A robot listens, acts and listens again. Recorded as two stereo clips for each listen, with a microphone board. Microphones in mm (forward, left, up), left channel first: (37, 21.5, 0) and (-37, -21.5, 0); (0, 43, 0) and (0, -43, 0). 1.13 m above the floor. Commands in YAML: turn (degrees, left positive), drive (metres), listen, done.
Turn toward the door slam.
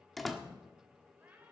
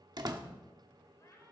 turn: -60
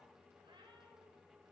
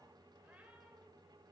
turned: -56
done: "Facing where the door slam came from. I can't hear it now."